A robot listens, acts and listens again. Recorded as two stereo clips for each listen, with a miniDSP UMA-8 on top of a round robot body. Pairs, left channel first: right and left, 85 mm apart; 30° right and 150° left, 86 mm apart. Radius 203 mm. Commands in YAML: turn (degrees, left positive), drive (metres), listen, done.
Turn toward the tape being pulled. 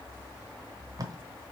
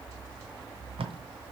turn: 140
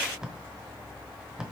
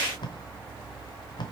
done: "Facing the tape being pulled, 1 to 2 m away."